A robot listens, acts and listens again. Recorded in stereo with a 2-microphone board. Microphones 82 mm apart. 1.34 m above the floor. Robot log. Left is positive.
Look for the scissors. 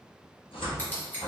note: The scissors: about 20° left or 160° left.
cmd yaw +20
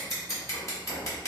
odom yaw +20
note: So it is at 135° left.
cmd yaw +135
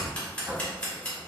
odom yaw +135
note: The scissors is now 15° left.
cmd yaw +15
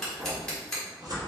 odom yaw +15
note: The scissors is now 10° left.
cmd yaw +10
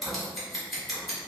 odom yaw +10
end: Facing the scissors, 1 to 2 m away.